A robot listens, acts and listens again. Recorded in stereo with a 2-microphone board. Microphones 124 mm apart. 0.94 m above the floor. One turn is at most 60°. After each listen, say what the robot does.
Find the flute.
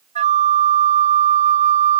Turn 60° right.
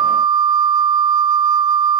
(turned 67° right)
Turn 35° right.
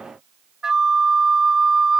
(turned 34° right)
Found it: a flute, straight ahead.